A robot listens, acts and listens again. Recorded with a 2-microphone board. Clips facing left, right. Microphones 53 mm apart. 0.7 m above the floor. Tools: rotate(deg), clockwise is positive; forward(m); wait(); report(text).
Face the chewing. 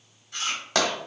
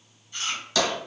rotate(-75)
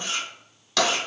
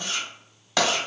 rotate(-30)
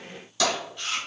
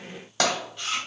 report("Found it: chewing, straight ahead.")